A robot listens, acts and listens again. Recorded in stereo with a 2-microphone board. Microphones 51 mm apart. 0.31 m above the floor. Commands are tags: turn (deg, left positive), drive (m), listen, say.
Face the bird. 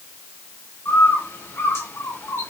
<turn deg="60"/>
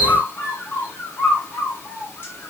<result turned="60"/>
<turn deg="50"/>
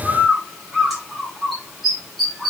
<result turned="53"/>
<say>Found it: a bird, straight ahead, 1 to 2 m away.</say>